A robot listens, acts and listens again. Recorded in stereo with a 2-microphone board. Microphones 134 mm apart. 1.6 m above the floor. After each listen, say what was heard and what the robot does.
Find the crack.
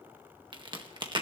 The crack: about 35° right or 145° right. Turn 35° right.
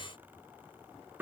Keep listening.
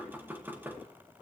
I heard a crack, but can't make it out now. It was about straight ahead or 110° right.